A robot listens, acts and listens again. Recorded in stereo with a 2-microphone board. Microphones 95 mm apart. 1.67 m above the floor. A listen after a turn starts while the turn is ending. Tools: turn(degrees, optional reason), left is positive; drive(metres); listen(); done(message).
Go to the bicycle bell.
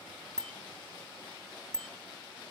turn(degrees=30)
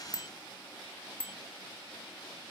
turn(degrees=-25, reason="So it is at 25° right.")
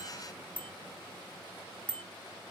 turn(degrees=15, reason="The bicycle bell is now 15° left.")
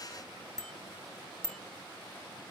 drive(metres=1.0)
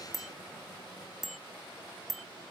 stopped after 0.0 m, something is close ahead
done("Something is in my way. I am facing the bicycle bell but have not reached it.")